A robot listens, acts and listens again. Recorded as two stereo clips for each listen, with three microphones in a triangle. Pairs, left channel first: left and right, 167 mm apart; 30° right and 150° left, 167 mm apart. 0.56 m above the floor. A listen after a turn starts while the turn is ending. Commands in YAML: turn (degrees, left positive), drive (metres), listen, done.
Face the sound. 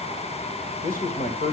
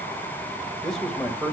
turn: 65
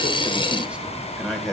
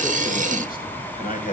done: "Facing the man speaking, 1 to 2 m away."